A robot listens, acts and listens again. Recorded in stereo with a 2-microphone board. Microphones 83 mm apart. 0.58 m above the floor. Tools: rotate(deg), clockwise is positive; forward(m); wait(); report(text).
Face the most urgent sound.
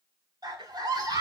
rotate(55)
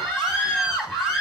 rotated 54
report("Facing the scream.")